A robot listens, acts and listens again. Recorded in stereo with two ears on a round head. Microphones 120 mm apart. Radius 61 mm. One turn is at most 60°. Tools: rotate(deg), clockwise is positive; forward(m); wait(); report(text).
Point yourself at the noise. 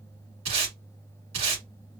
rotate(55)
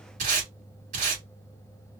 rotate(60)
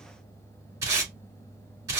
rotate(20)
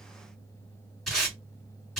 report("Found it: tape being pulled, straight ahead, 2 to 4 m away.")